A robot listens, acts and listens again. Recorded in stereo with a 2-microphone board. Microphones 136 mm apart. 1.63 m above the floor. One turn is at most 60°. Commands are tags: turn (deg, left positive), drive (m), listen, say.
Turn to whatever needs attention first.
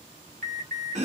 <turn deg="-60"/>
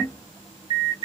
<turn deg="-35"/>
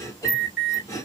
<turn deg="-10"/>
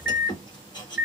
<say>Found it: an alarm, straight ahead.</say>